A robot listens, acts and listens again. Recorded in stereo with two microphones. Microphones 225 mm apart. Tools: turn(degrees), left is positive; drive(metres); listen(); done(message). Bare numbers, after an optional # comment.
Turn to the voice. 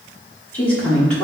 turn(30)
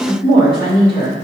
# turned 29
# So it is at 25° right.
turn(-25)
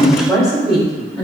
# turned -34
done("Facing the woman speaking, 2 to 4 m away.")